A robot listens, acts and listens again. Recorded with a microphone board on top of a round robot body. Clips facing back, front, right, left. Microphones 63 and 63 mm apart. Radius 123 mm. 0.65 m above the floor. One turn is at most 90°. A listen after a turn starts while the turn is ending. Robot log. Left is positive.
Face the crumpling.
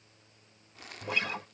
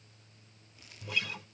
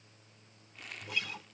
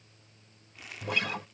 note: The crumpling: 175° left.
cmd yaw +90
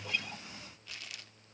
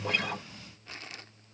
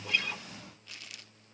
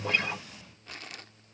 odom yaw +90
note: The crumpling is now 50° left.
cmd yaw +50
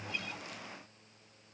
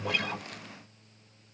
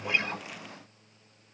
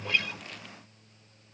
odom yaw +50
cmd idle
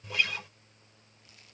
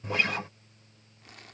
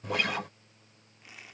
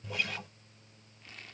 note: The crumpling is now 10° right.
cmd yaw -10
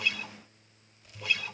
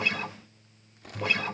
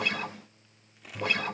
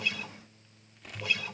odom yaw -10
end: Found it: crumpling, straight ahead.